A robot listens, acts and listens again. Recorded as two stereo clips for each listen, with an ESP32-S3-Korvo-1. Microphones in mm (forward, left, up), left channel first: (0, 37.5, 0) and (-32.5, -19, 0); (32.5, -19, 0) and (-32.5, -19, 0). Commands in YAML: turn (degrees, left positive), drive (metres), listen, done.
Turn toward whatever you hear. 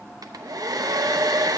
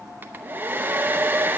turn: -120
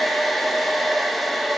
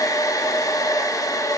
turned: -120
turn: -30
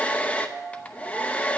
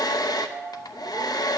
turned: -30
turn: -10
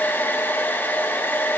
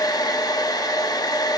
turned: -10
done: "Found it: a hair dryer, straight ahead, under 1 m away."